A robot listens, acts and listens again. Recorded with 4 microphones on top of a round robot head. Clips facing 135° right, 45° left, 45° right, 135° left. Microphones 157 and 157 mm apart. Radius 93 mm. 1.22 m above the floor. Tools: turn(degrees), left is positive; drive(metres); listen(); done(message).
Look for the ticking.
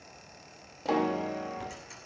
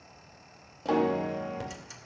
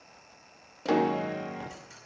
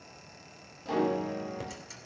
turn(degrees=90)
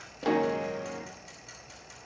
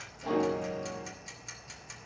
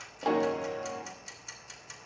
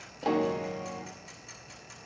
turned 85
done("Facing the ticking, 2 to 4 m away.")